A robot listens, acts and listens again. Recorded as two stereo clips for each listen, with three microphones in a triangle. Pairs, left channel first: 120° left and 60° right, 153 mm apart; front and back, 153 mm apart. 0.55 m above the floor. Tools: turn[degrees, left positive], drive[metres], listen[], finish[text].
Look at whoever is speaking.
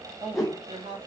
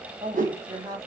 Thought: The woman speaking: 115° right.
Action: turn[-115]
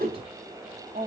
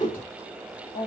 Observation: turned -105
Thought: The woman speaking is now 10° right.
Action: turn[-10]
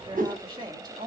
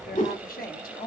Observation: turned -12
Action: finish[Found it: a woman speaking, straight ahead.]